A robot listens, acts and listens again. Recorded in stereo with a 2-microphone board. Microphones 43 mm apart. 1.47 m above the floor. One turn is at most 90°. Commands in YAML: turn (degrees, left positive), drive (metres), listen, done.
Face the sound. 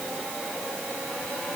listen: true
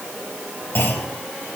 turn: 60
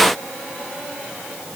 listen: true
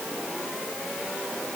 done: "I heard a clunk, but can't make it out now. It was about straight ahead or 60° left."